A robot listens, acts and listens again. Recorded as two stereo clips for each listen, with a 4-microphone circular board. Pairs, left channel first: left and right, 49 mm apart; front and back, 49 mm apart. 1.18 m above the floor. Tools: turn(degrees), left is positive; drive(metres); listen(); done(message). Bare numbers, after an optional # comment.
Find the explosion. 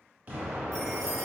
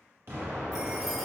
# The explosion: 140° right.
turn(-140)
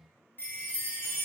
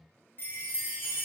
done("Facing where the explosion came from. I can't hear it now.")